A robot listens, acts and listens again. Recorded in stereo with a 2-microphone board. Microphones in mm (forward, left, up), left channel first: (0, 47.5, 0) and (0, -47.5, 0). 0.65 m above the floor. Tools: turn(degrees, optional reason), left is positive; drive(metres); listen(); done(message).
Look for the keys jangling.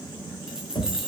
turn(degrees=-30)
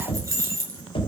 turn(degrees=-145, reason="So it is at 145° right.")
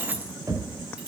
turn(degrees=-10, reason="The keys jangling is now 10° right.")
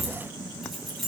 done("Found it: keys jangling, straight ahead.")